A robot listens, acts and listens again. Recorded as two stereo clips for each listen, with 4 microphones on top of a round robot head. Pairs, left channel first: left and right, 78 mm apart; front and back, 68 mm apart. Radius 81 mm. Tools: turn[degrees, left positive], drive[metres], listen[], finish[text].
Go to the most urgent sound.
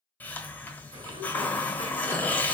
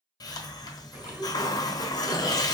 Action: listen[]
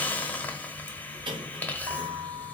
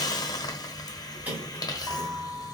Action: listen[]
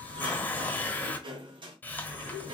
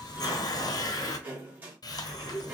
Action: finish[I can't make out anything urgent, only a hiss and a sliding door.]